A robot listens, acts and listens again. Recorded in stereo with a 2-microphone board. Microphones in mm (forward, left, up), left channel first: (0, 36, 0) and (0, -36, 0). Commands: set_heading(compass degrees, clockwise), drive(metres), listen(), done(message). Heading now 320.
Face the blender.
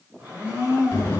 set_heading(345)
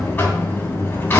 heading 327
listen()
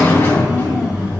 listen()
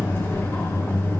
done("I heard a blender, but can't make it out now. It was about 20° right or 150° right.")